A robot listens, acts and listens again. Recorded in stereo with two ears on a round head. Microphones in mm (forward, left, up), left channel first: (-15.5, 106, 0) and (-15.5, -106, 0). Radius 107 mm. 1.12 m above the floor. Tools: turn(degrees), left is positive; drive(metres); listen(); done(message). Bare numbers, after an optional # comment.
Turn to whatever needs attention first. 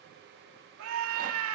# The scream: about 70° right or 110° right.
turn(-70)
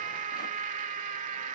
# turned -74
# So it is at 35° right.
turn(-35)
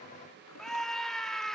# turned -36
done("Found it: a scream, straight ahead, 2 to 4 m away.")